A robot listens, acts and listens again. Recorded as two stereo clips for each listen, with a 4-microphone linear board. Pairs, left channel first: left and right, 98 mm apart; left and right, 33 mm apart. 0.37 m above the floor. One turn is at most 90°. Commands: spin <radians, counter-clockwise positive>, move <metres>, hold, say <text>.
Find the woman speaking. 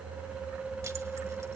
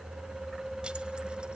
hold
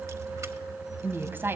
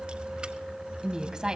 spin -0.44
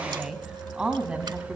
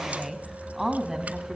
spin -0.52
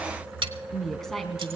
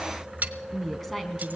say Found it: a woman speaking, straight ahead.